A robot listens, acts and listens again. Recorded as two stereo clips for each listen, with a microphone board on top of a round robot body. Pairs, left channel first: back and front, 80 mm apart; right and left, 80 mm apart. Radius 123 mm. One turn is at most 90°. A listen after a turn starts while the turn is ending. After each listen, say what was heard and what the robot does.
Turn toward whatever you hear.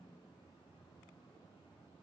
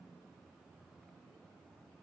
Keep listening.
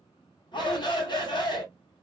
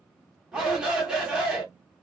The shout: 170° left. Turn 90° left.
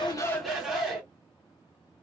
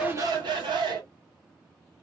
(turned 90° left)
The shout is now 80° left. Turn 80° left.
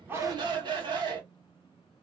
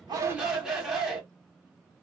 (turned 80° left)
Facing the shout.